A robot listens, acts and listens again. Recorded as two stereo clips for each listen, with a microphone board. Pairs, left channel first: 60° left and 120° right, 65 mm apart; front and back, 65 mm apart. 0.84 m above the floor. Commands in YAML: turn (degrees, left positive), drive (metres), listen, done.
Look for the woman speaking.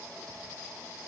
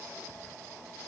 listen: true
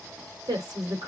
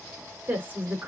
turn: -115
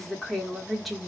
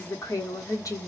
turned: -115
turn: -35
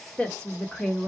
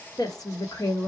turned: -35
turn: -20
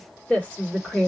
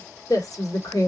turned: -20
turn: -10
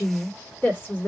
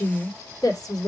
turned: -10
done: "Facing the woman speaking."